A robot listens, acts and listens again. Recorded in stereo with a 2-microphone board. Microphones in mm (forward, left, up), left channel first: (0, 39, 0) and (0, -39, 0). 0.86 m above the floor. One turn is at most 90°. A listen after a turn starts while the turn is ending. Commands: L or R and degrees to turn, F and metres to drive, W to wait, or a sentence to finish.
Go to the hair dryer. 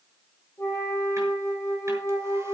W
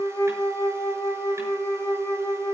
W
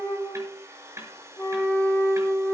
R35
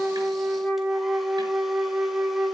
W
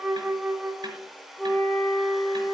F1.0
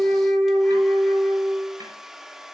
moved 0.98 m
F1.0
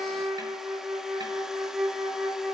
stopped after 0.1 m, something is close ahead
W
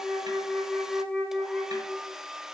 Arrived at the hair dryer, straight ahead.